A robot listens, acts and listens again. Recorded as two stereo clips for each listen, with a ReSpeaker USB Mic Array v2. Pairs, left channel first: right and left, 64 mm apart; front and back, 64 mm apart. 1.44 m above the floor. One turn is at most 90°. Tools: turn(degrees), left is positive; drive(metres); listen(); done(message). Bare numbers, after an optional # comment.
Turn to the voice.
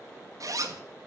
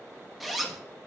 listen()
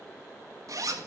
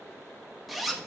listen()
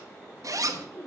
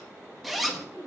# The woman speaking: 35° right.
turn(-35)
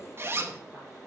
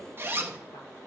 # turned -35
listen()
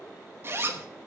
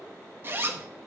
listen()
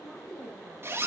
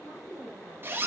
done("Found it: a woman speaking, straight ahead, over 4 m away.")